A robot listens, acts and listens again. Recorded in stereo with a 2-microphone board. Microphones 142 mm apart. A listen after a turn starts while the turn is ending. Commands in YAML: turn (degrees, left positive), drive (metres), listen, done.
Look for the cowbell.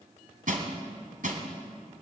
listen: true
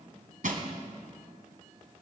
listen: true
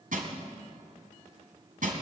done: "I can't make out a cowbell, only crushing."